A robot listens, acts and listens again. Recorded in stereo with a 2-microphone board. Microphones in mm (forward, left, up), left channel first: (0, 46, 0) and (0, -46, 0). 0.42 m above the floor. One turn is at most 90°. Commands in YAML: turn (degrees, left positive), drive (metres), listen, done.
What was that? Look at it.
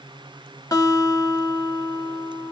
turn: 40
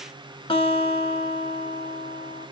turn: 90
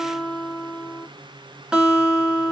turn: -10
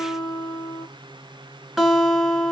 done: "Found it: a guitar, straight ahead, 1 to 2 m away."